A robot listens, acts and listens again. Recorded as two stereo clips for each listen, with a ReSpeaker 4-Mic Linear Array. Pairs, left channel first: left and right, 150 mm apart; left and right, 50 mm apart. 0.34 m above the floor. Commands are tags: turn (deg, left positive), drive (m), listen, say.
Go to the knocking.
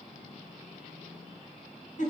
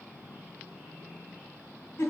<listen/>
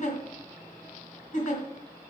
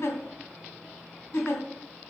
<listen/>
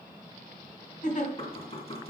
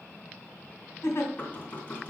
<turn deg="40"/>
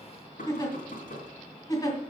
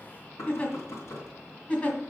<turn deg="95"/>
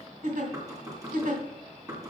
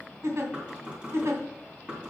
<turn deg="-25"/>
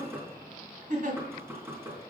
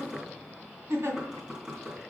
<turn deg="-15"/>
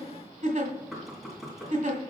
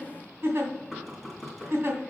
<drive m="1.0"/>
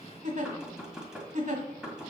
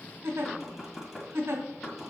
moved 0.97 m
<drive m="1.0"/>
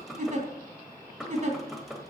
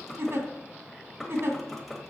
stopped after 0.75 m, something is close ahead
<say>Arrived at the knocking, straight ahead.</say>